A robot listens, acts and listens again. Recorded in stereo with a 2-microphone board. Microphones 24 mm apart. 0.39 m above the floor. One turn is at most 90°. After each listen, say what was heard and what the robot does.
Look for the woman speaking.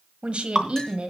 The woman speaking: about 60° right or 120° right. Turn 60° right.
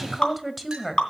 Facing the woman speaking.